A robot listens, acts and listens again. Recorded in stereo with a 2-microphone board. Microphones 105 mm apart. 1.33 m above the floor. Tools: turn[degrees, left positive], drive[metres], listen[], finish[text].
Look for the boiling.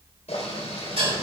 Action: turn[90]
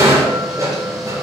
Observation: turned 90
Action: listen[]
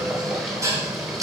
Action: finish[Found it: boiling, straight ahead, 2 to 4 m away.]